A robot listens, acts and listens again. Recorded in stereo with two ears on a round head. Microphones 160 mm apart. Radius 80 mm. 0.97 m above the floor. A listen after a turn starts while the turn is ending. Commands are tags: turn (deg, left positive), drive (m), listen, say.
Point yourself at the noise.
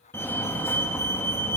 <turn deg="30"/>
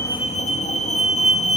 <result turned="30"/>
<turn deg="135"/>
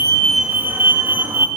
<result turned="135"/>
<turn deg="-15"/>
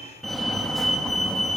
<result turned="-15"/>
<say>Facing the fire alarm, 2 to 4 m away.</say>